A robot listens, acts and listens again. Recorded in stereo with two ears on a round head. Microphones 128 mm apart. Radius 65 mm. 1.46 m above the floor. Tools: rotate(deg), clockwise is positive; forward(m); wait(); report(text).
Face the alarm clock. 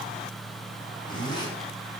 wait()
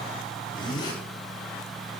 wait()
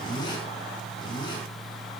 report("I can't make out an alarm clock to turn to.")